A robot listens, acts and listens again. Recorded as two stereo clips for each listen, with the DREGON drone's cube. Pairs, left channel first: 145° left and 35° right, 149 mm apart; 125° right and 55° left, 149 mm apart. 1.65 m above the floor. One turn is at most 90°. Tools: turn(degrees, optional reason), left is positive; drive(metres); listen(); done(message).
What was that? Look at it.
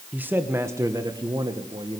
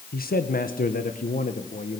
turn(degrees=-90, reason="The man speaking: 90° right.")
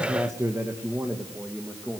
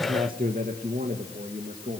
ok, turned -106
turn(degrees=50, reason="The man speaking is now 50° left.")
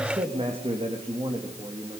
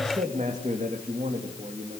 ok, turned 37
turn(degrees=20, reason="The man speaking is now 20° left.")
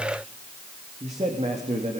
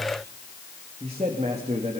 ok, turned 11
turn(degrees=10, reason="The man speaking is now 10° left.")
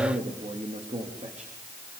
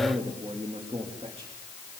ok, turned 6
done("Facing the man speaking, 2 to 4 m away.")